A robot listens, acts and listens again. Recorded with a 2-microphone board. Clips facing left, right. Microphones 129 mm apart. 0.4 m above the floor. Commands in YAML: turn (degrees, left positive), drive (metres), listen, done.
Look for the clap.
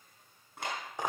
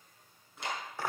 turn: 65
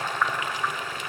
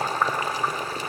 listen: true
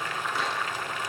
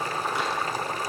listen: true
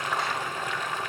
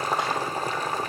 done: "I heard a clap, but can't make it out now. It was about straight ahead or 50° left."